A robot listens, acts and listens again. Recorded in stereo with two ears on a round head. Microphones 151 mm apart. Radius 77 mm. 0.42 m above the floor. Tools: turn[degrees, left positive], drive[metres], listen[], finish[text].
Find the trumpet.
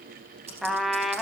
Action: turn[30]
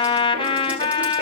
Thought: So it is at 150° left.
Action: turn[150]
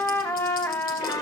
Thought: The trumpet is now 10° left.
Action: turn[10]
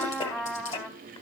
Action: finish[Found it: a trumpet, straight ahead.]